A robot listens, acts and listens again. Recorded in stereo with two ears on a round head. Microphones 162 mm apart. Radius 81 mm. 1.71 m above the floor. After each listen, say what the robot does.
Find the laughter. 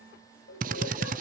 Turn 65° left.
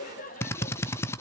Turn 45° left.
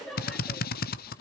Facing the laughter.